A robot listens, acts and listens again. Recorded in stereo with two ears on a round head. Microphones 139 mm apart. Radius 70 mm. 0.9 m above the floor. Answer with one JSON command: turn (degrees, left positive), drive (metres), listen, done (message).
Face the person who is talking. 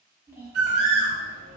{"turn": -15}
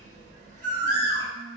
{"turn": -150}
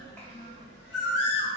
{"turn": 10}
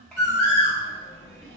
{"done": "Facing the child speaking."}